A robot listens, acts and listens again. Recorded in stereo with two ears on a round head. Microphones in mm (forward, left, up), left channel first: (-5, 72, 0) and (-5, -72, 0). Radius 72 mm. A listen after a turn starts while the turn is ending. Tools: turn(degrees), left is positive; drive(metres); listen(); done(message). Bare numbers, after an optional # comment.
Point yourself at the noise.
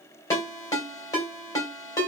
# The ringtone: about 20° left or 160° left.
turn(20)
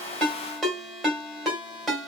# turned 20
done("Facing the ringtone.")